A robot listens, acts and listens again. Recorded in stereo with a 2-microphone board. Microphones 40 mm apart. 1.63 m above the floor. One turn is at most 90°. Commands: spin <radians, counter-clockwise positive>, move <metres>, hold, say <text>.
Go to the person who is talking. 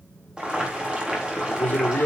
spin 0.79
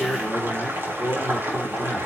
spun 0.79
move 1.0
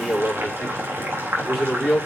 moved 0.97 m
spin -0.17
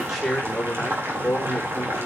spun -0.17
move 1.0
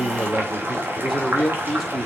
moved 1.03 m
move 1.0
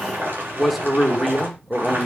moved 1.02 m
move 1.0
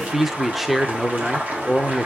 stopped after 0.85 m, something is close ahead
say I am next to the man speaking.